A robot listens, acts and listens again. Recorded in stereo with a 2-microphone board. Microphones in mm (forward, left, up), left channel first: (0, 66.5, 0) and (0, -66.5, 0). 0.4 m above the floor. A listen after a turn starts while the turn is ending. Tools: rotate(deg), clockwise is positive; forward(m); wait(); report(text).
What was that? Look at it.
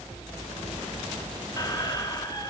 rotate(-30)
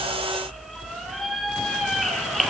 report("Facing the squeak.")